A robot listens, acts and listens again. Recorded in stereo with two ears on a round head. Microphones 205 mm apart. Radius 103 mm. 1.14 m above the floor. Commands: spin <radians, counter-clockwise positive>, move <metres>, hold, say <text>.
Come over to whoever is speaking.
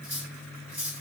hold
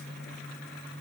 hold
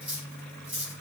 say I can't make out anyone speaking to turn to.